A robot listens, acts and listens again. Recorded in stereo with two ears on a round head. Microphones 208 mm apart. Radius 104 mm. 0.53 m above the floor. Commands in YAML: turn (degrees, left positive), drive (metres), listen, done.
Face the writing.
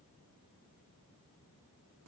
listen: true
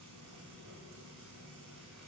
listen: true
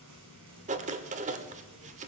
turn: -30
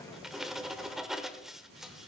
done: "Facing the writing."